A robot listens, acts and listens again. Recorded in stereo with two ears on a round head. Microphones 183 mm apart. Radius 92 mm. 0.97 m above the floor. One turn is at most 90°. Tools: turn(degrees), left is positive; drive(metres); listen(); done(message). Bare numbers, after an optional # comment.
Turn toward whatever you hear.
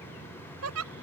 # The giggle: about 75° right or 105° right.
turn(-75)
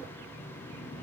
listen()
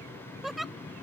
done("Facing the giggle.")